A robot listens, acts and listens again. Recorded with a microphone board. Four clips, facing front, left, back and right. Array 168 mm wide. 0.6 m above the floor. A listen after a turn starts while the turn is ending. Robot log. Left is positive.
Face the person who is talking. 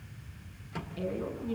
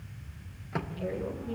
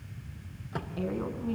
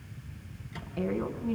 note: The woman speaking: 130° right.
cmd yaw -130
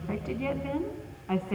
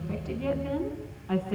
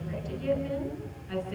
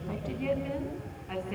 note: The woman speaking is now 15° left.
cmd yaw +15
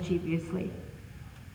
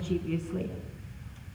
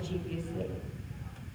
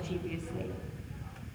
end: Facing the woman speaking, over 4 m away.